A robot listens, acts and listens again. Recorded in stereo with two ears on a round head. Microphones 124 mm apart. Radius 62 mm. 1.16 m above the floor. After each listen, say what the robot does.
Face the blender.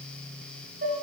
Keep listening.
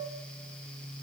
Keep listening.
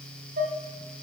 I can't make out a blender, only dishes clattering.